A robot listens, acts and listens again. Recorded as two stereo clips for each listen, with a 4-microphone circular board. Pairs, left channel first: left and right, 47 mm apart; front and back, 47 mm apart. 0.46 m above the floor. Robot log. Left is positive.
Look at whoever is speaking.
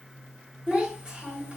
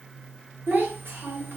note: The child speaking: 160° right.
cmd yaw -160
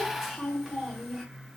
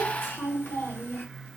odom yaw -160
note: The child speaking is now 10° right.
cmd yaw -10
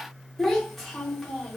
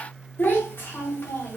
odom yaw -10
end: Facing the child speaking.